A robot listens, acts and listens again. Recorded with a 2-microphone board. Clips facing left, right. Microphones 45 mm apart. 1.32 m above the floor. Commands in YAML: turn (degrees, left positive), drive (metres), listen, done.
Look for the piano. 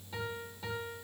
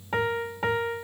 turn: -55
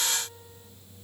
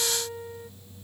turn: -60
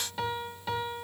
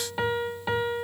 turn: -25
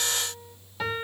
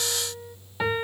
turn: -20
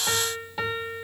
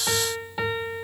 done: "Facing the piano."